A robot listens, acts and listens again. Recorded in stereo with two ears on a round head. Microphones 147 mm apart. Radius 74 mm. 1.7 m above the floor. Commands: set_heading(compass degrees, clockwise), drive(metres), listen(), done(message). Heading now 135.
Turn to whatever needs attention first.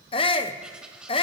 set_heading(105)
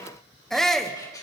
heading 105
done("Facing the shout.")